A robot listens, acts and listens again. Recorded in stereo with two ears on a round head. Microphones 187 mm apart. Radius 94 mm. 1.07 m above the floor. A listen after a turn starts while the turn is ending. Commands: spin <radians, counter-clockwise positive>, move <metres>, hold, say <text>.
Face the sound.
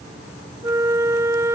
spin -0.52
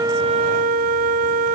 spin -2.36
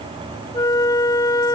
spin 0.35
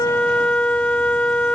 say Found it: a flute, straight ahead.